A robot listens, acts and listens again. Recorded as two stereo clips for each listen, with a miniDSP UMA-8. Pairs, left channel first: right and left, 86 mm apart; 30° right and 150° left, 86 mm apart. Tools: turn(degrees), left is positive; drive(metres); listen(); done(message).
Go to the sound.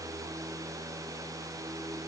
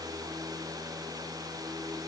listen()
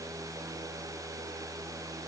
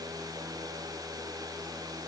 listen()
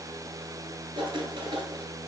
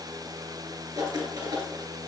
turn(degrees=115)
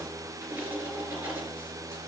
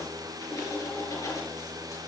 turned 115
turn(degrees=20)
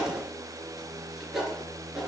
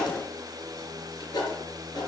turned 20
drive(metres=1.0)
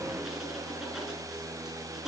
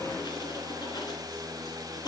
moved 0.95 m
listen()
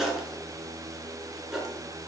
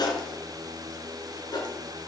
drive(metres=1.0)
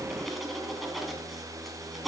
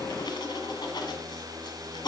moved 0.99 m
drive(metres=1.0)
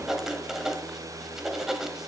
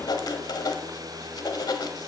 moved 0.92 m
drive(metres=1.0)
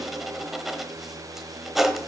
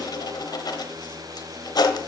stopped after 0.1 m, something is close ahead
done("I am next to the writing.")